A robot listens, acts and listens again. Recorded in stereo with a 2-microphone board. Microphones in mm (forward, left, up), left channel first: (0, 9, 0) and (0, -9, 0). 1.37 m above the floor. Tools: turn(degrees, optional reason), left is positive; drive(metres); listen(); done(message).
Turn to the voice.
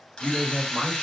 turn(degrees=-30)
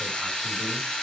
listen()
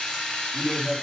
turn(degrees=20, reason="So it is at 20° left.")
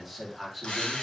done("Found it: a man speaking, straight ahead.")